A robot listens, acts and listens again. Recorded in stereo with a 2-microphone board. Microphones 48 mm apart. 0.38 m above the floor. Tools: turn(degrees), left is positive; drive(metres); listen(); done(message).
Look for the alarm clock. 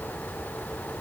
listen()
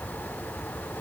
listen()
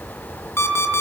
turn(degrees=60)
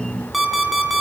done("Facing the alarm clock, 2 to 4 m away.")